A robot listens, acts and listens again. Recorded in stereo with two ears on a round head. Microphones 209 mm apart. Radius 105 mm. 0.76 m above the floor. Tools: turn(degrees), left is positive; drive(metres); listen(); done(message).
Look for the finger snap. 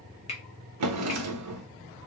turn(degrees=30)
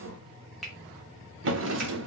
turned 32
done("Facing the finger snap.")